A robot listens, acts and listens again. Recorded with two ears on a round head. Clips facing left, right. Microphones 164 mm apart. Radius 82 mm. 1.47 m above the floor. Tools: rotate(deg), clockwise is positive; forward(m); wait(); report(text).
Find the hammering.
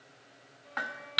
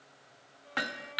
rotate(40)
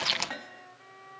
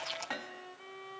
report("Found it: hammering, straight ahead.")